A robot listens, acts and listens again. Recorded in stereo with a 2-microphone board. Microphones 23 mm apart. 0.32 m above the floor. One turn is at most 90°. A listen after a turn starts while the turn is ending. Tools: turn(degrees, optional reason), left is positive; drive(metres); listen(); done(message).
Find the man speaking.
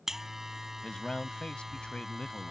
turn(degrees=50, reason="The man speaking: about 50° left or 130° left.")
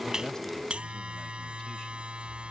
listen()
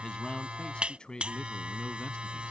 turn(degrees=45, reason="So it is at 45° left.")
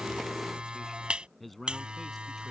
done("Facing the man speaking.")